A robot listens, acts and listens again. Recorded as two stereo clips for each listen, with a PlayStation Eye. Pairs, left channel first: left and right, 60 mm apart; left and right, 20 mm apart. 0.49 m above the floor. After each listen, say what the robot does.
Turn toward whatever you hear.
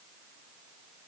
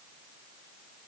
Keep listening.
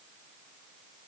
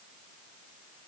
Keep listening.
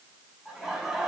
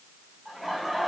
Turn 30° right.
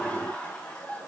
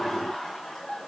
Turn 15° left.
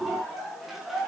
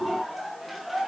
Found it: laughter, straight ahead.